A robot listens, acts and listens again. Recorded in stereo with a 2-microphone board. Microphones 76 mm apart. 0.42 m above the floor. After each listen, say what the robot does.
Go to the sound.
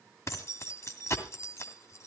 Turn 40° left.
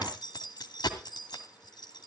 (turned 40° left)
Turn 95° left.
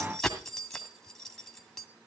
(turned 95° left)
Drive 1.0 m forward.
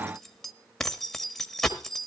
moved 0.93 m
Drive 1.0 m forward.
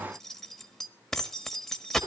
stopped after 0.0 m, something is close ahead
Turn 10° left.
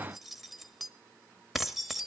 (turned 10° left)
Arrived at the keys jangling, straight ahead.